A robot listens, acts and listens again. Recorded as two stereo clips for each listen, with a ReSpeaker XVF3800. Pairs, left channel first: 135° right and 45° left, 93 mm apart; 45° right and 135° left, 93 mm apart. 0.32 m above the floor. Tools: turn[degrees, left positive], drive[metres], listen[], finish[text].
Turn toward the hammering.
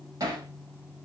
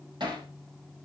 Thought: The hammering: 100° left.
Action: turn[100]
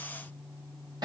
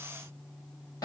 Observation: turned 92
Action: finish[Facing the hammering, over 4 m away.]